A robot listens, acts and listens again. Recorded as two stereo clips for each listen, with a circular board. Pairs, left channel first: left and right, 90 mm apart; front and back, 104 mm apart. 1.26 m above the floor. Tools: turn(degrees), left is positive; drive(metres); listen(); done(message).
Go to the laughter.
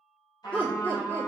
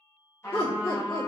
turn(degrees=20)
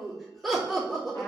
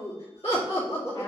drive(metres=1.0)
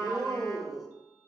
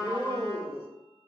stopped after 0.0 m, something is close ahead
done("Blocked. The laughter is further on, straight ahead.")